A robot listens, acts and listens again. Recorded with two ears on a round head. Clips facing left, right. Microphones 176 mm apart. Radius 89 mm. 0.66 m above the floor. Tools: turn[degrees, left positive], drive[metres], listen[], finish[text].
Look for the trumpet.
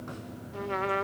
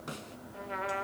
Thought: The trumpet: about 55° left or 125° left.
Action: turn[55]
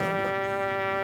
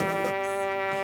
Action: finish[Facing the trumpet.]